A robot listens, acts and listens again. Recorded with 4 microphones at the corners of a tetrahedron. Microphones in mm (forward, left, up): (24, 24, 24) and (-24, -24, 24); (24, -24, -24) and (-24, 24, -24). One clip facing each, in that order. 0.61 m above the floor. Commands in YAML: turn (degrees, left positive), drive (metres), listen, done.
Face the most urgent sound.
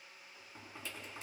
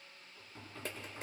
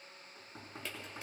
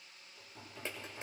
listen: true
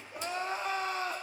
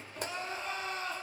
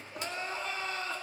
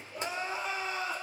turn: 65
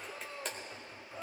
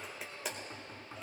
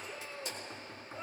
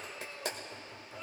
turn: 10
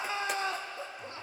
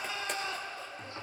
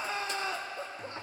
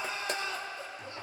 done: "Found it: crying, straight ahead."